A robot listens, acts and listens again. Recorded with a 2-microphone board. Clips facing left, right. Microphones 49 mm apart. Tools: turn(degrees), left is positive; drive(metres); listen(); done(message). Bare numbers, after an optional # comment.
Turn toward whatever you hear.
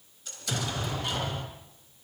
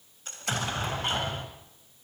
# The explosion: about 40° right or 140° right.
turn(-40)
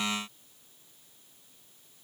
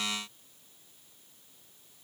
listen()
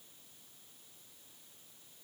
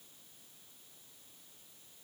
done("I heard an explosion, but can't make it out now. It was about straight ahead or 100° right.")